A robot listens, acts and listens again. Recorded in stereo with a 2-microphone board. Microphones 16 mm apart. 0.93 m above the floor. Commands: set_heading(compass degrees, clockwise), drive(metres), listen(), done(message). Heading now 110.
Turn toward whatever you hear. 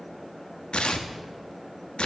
set_heading(20)
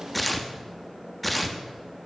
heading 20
done("Facing the tearing paper.")